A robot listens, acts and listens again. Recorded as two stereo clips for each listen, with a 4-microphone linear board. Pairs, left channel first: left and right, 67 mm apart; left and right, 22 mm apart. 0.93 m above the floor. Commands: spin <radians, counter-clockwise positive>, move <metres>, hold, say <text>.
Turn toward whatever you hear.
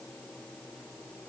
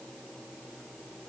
hold
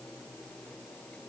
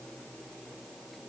hold
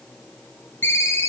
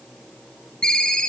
spin 0.61
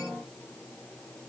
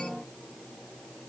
hold
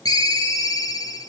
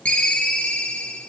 spin 1.92
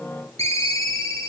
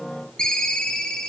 spin 0.96
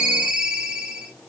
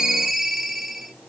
spin -0.26
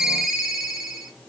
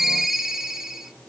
say Found it: a ringtone, straight ahead.